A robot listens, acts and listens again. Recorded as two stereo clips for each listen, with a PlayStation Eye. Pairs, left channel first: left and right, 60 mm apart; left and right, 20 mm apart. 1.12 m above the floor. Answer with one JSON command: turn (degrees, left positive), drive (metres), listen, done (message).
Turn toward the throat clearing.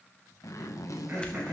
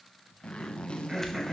{"turn": -25}
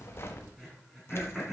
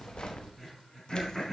{"done": "Facing the throat clearing, 2 to 4 m away."}